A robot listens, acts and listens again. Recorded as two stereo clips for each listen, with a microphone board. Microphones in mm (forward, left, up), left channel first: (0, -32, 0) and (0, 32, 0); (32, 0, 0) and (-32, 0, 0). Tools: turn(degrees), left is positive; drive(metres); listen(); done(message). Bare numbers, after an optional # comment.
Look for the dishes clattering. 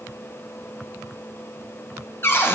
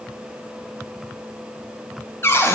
listen()
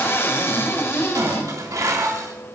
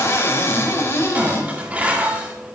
# The dishes clattering: 115° left.
turn(115)
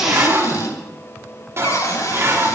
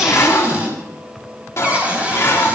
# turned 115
# The dishes clattering is now 45° left.
turn(45)
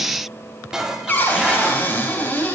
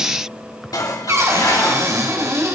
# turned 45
# The dishes clattering is now 10° left.
turn(10)
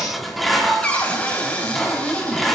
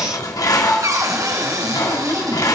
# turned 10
done("Found it: dishes clattering, straight ahead, 2 to 4 m away.")